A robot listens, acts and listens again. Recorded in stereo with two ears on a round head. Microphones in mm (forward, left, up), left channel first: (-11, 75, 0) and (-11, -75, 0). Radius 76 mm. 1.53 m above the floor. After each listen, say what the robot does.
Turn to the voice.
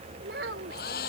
Turn 70° right.
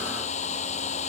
Keep listening.
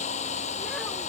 Keep listening.
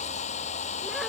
I heard a child speaking, but can't make it out now. It was about straight ahead or 40° right.